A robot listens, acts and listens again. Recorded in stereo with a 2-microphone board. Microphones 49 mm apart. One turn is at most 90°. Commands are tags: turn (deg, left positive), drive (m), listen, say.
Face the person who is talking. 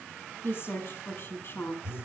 <turn deg="50"/>
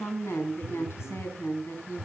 <turn deg="75"/>
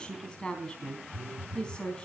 <turn deg="20"/>
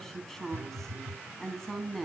<turn deg="10"/>
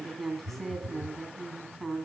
<say>Facing the woman speaking, 2 to 4 m away.</say>